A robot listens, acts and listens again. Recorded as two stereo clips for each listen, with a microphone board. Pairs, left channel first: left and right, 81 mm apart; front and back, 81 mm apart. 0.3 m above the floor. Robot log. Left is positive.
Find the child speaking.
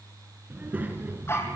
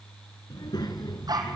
note: The child speaking: 25° right.
cmd yaw -25
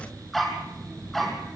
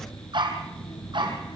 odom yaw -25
end: Found it: a child speaking, straight ahead.